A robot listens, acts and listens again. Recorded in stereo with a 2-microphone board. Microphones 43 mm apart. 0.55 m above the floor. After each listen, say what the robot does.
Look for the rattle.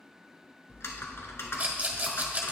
Turn 35° right.
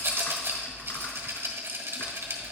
Turn 105° right.
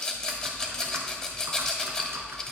Turn 15° left.
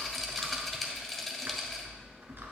Facing the rattle.